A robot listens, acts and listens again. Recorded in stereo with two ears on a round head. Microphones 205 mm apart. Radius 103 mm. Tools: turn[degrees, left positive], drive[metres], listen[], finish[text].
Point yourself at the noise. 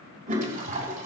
Thought: The toilet flushing: about 35° right or 145° right.
Action: turn[-35]
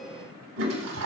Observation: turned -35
Thought: So it is at 110° right.
Action: turn[-110]
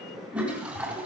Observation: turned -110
Action: finish[Found it: a toilet flushing, straight ahead.]